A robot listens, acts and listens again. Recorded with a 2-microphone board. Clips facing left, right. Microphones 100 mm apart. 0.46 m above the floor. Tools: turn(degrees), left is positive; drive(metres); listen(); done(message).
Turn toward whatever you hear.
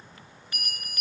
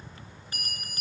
turn(degrees=-30)
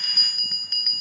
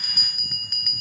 done("Found it: a bell, straight ahead, 2 to 4 m away.")